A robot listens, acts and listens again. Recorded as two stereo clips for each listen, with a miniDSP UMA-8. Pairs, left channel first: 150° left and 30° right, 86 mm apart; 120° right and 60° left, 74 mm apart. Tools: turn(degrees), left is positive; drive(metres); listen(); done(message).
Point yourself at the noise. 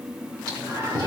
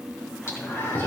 turn(degrees=-65)
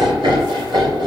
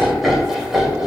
turn(degrees=-20)
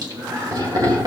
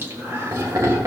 turn(degrees=10)
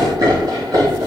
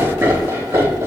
turn(degrees=10)
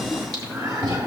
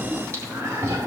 turn(degrees=10)
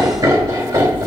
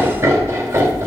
done("Found it: laughter, straight ahead.")